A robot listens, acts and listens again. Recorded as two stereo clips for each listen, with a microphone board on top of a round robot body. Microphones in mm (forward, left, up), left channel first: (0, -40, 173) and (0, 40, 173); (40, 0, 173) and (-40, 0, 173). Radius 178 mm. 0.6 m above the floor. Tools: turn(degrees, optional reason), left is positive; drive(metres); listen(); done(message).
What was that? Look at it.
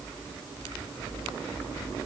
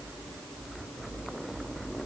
listen()
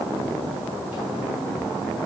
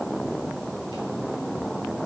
listen()
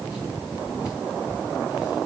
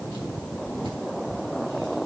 done("I can't make out anything.")